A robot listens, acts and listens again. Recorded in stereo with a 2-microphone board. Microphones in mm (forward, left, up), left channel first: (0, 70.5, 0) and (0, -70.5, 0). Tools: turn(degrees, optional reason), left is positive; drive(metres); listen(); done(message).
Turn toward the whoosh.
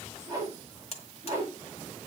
turn(degrees=-25, reason="The whoosh: about 25° right or 155° right.")
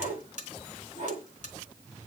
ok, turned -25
turn(degrees=-130, reason="So it is at 130° right.")
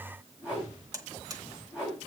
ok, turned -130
done("Found it: a whoosh, straight ahead.")